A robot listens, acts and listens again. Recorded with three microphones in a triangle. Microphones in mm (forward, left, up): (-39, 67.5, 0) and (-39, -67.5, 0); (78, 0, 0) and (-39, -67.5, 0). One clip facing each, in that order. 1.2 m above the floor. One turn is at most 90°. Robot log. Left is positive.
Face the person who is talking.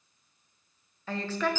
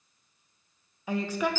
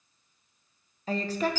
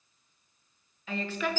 note: The woman speaking: 15° right.
cmd yaw -15
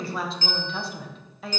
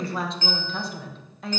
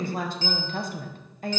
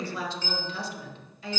end: Found it: a woman speaking, straight ahead, under 1 m away.